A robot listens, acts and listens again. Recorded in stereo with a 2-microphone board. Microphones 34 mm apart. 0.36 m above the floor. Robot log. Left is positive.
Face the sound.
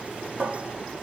note: The cupboard door: about 40° right or 140° right.
cmd yaw -40
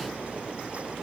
cmd idle
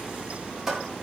note: So it is at 10° right.
cmd yaw -10
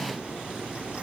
cmd idle
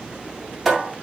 end: Found it: a cupboard door, straight ahead.